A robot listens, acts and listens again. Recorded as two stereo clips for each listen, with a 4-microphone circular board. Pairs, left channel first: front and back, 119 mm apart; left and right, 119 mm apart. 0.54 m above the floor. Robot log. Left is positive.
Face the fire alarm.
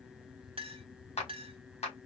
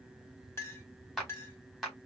cmd idle
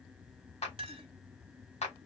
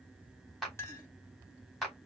cmd idle
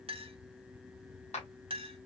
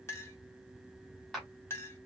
end: I can't make out a fire alarm, only a clink and a clap.